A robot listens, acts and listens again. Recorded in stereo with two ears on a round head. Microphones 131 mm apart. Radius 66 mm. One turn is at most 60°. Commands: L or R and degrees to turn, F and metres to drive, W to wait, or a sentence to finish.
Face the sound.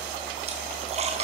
R50
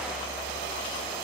W
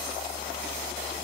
I heard a splash, but can't make it out now. It was about straight ahead or 80° right.